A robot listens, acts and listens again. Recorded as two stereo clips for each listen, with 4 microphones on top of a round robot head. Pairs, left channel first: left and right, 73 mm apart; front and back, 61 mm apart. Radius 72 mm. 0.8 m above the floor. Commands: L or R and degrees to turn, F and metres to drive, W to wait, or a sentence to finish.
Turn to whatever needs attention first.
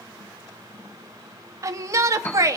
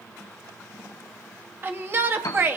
R130
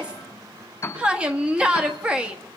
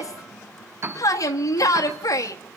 R15
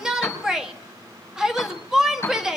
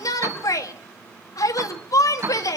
R10
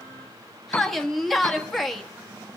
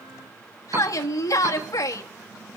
Facing the shout.